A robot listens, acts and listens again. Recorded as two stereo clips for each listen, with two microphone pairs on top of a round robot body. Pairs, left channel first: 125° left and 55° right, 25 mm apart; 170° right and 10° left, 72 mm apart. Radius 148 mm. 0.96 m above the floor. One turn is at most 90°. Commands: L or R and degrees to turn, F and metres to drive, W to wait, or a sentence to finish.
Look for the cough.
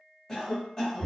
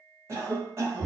L55
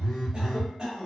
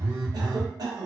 Found it: a cough, straight ahead, 1 to 2 m away.